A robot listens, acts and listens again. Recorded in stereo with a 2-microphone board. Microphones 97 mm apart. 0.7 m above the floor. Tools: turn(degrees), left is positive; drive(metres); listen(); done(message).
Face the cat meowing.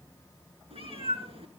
turn(degrees=-90)
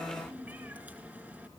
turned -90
turn(degrees=-15)
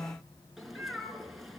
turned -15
done("Facing the cat meowing, over 4 m away.")